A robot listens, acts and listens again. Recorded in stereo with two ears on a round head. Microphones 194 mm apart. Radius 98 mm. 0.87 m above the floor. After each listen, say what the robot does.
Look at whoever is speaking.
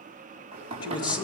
Turn 20° left.
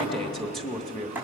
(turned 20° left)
Facing the man speaking.